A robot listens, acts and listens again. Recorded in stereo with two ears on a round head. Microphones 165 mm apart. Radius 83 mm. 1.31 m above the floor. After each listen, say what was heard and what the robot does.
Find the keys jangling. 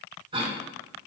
Keep listening.
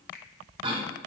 Keep listening.
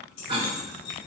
Turn 90° left.
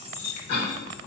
So it is at 15° left. Turn 15° left.
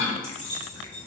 The keys jangling is now 10° left. Turn 10° left.
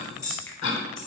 Found it: keys jangling, straight ahead, 2 to 4 m away.